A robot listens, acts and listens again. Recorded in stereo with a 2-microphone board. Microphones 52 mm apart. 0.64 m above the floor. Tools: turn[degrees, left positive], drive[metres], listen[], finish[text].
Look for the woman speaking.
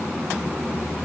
Action: listen[]
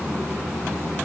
Action: listen[]
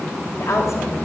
Thought: The woman speaking: about 70° left or 110° left.
Action: turn[70]
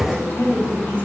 Thought: So it is at 30° left.
Action: turn[30]
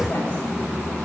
Action: listen[]
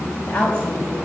Thought: The woman speaking is now 20° left.
Action: turn[20]
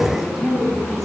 Action: finish[Facing the woman speaking.]